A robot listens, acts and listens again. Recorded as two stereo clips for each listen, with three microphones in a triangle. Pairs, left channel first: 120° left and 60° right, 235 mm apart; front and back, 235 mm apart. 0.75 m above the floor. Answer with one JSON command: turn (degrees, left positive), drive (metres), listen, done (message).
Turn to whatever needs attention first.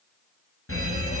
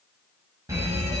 {"turn": 100}
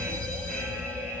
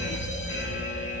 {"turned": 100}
{"turn": 35}
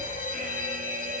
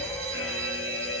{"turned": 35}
{"done": "Facing the fire alarm, over 4 m away."}